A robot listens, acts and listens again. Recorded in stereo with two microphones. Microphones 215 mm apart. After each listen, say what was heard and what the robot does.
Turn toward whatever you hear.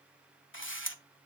The camera shutter: about 65° left or 115° left. Turn 65° left.
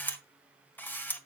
So it is at 10° left. Turn 10° left.
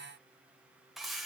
Facing the camera shutter.